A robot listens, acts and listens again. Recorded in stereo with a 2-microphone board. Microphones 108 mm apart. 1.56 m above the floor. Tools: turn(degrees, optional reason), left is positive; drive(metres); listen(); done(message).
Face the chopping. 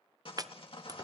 turn(degrees=-35, reason="The chopping: about 35° right or 145° right.")
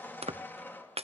turn(degrees=-105, reason="So it is at 105° right.")
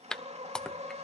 done("Found it: chopping, straight ahead, under 1 m away.")